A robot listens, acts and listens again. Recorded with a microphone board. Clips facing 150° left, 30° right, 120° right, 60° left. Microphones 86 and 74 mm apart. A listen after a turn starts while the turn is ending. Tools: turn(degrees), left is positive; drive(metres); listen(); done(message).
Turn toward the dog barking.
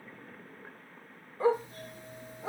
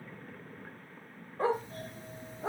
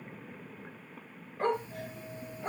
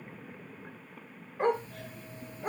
turn(degrees=-15)
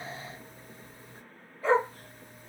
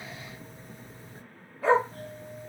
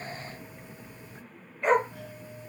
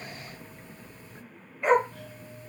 turn(degrees=-30)
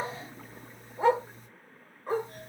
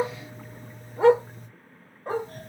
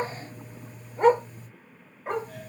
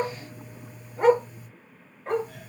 turn(degrees=-35)
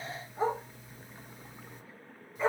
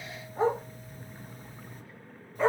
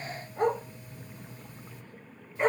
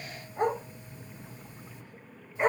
turn(degrees=-10)
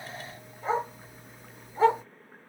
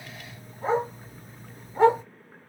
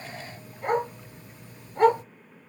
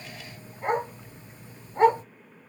done("Found it: a dog barking, straight ahead, 2 to 4 m away.")